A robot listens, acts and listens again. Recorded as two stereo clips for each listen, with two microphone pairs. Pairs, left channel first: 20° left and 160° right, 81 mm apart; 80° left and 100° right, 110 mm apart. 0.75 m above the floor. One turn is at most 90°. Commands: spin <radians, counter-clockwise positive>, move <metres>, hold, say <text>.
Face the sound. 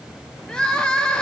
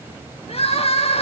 spin 1.57
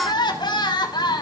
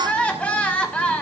say Found it: crying, straight ahead.